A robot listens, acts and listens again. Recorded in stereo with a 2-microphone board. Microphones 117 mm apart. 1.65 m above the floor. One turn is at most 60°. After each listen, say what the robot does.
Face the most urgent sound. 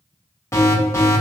Turn 20° left.
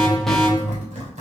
Facing the alarm, 1 to 2 m away.